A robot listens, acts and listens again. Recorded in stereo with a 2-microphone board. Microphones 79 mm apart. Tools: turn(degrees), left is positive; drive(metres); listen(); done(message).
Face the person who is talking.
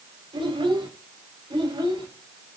turn(degrees=-90)
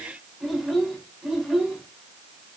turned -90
done("Facing the child speaking.")